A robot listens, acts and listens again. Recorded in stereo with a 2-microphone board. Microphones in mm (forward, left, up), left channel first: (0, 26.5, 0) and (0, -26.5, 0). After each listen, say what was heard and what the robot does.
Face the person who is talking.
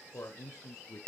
The man speaking: about 55° left or 125° left. Turn 55° left.
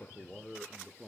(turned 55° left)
So it is at 15° right. Turn 15° right.
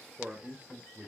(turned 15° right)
The man speaking is now 35° right. Turn 35° right.
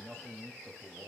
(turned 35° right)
The man speaking is now 35° right. Turn 35° right.
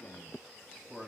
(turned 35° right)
The man speaking is now 15° right. Turn 15° right.
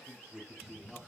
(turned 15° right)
The man speaking is now 10° right. Turn 10° right.
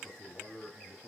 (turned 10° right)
Found it: a man speaking, straight ahead, 2 to 4 m away.